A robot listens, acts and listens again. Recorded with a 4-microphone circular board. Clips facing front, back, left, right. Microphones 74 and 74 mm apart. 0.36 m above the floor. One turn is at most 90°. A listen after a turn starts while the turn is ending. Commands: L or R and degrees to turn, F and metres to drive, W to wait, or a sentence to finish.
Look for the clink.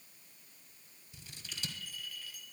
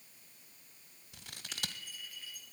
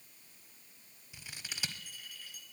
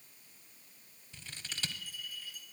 L90
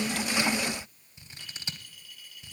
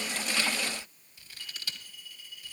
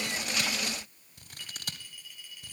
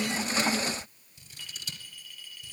L10
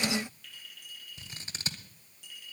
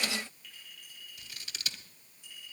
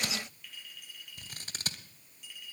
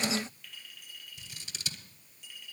Found it: a clink, straight ahead.